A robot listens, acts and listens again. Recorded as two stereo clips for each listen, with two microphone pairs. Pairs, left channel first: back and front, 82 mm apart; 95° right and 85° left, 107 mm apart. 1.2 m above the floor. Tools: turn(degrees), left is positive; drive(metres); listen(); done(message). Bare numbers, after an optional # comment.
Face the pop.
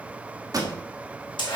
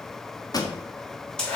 # The pop: 40° right.
turn(-40)
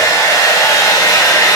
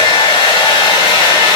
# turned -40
done("I heard a pop from this way, but can't make it out now.")